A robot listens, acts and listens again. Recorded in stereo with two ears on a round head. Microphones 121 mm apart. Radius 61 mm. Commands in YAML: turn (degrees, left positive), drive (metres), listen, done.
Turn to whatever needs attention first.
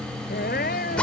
turn: 75
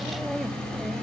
done: "Facing the crying."